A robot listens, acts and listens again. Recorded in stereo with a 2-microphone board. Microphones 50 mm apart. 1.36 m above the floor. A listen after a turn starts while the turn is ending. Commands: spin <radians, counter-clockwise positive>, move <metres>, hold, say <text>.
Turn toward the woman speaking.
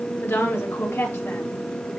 spin 0.96
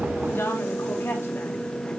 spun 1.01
spin 0.96
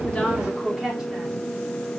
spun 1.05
spin -0.17
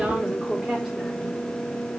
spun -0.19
say Facing the woman speaking.